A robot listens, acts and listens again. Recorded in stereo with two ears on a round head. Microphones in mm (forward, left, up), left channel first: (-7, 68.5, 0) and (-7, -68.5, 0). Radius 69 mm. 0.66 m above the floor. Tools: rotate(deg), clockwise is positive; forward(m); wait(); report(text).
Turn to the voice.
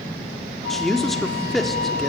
rotate(-30)
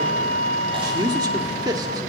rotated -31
rotate(30)
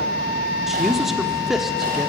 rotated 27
report("Found it: a man speaking, straight ahead.")